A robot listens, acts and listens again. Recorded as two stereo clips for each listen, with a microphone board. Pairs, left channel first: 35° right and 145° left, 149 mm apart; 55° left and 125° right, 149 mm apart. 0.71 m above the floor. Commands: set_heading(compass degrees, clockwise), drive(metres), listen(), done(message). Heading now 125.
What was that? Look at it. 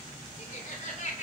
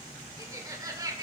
set_heading(185)
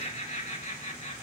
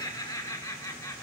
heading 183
set_heading(193)
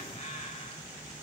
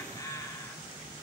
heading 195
done("Facing the laughter.")